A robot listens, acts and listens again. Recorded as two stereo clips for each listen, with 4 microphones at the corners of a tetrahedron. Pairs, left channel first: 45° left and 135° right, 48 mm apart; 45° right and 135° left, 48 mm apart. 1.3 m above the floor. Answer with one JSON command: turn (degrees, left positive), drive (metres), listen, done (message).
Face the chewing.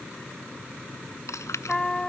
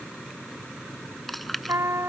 {"turn": 45}
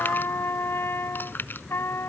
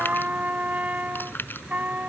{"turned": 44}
{"done": "Facing the chewing."}